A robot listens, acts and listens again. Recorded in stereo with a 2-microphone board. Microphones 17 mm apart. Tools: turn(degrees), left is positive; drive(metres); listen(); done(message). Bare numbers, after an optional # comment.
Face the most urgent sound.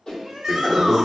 # The shout: about 30° right or 150° right.
turn(-30)
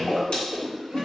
listen()
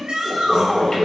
# So it is at 115° right.
turn(-115)
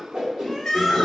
# The shout is now 30° left.
turn(30)
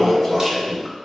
listen()
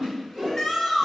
# The shout is now 20° left.
turn(20)
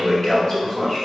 listen()
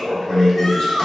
# The shout is now 10° left.
turn(10)
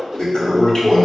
listen()
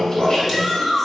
done("Found it: a shout, straight ahead.")